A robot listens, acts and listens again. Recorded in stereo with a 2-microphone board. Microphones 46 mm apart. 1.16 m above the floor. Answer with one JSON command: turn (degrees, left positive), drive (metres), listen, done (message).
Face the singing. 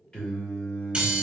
{"turn": 20}
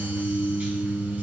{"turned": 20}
{"turn": 20}
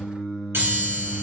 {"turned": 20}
{"turn": 30}
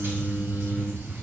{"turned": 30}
{"turn": 30}
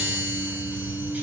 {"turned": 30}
{"done": "Facing the singing."}